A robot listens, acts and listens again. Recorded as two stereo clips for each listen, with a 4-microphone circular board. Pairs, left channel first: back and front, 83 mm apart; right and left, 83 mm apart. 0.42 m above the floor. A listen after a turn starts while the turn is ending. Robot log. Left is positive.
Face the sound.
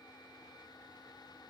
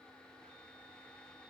cmd idle
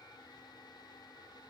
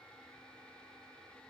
cmd idle
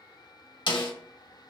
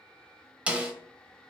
note: The snare drum: 165° left.
cmd yaw +165
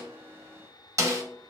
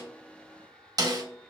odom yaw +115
note: The snare drum is now 55° left.
cmd yaw +55
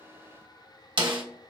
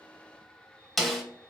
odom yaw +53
end: Found it: a snare drum, straight ahead, under 1 m away.